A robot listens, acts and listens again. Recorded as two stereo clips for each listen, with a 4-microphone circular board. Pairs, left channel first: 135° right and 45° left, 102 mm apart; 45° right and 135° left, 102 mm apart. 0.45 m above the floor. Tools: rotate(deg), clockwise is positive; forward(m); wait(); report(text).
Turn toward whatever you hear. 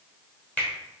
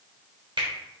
rotate(-150)
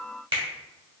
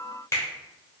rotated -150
rotate(-15)
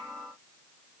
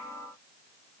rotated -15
wait()
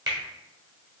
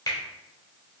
report("Facing the finger snap, 1 to 2 m away.")